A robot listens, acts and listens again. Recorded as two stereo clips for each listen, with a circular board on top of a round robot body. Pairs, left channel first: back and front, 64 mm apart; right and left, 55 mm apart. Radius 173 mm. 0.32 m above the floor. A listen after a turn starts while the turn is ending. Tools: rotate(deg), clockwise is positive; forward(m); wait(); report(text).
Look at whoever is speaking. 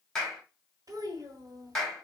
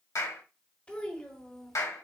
rotate(10)
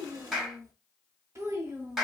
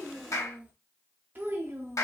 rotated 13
rotate(-50)
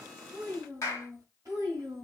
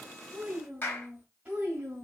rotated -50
rotate(-30)
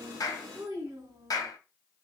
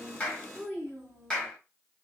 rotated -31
report("Found it: a child speaking, straight ahead.")